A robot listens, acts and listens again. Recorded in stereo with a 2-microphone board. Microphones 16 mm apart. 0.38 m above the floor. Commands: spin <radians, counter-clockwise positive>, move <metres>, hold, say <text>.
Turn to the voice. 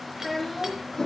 spin -0.52
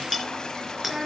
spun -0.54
spin -2.44
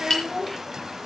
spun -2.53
say Found it: a child speaking, straight ahead.